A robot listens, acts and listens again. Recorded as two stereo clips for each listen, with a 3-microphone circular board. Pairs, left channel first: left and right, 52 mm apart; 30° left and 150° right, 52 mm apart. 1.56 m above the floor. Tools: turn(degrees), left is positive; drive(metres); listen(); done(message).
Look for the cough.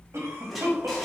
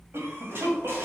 turn(degrees=-115)
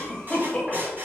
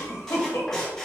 turn(degrees=15)
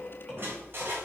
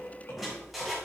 done("Facing the cough.")